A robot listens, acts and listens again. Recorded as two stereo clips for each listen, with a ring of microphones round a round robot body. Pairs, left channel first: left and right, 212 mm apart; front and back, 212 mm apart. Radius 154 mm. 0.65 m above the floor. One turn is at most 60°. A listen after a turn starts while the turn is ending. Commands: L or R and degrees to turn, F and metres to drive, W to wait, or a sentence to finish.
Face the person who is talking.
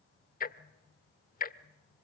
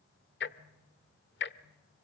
W
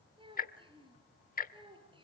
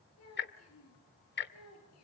R25
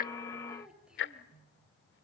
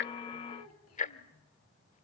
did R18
Found it: a child speaking, straight ahead.